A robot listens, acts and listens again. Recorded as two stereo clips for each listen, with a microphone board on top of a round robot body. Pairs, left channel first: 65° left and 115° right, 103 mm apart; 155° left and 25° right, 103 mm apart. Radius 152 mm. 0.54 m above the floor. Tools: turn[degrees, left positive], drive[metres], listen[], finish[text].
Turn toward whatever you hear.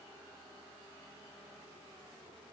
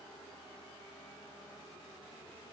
Action: listen[]
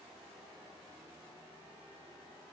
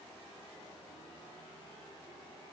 Action: listen[]
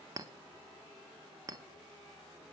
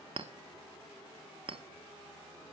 Thought: The clink: 55° right.
Action: turn[-55]
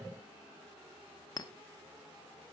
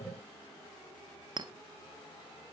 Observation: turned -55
Thought: The clink is now 20° left.
Action: turn[20]
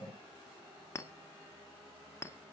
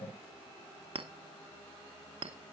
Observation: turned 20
Action: finish[Found it: a clink, straight ahead, under 1 m away.]